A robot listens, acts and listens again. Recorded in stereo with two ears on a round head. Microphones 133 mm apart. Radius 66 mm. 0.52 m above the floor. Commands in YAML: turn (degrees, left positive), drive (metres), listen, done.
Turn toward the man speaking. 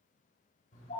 listen: true
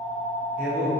turn: -60
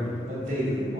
turn: -60
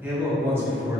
turn: -20
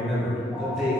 done: "Facing the man speaking, 2 to 4 m away."